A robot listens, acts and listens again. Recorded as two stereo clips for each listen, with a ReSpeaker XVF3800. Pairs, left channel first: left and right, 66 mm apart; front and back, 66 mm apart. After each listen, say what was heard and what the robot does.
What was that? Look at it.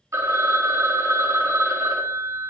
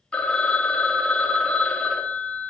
The phone ringing: 70° right. Turn 70° right.
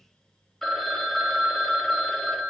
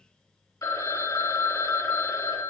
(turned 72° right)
Facing the phone ringing, under 1 m away.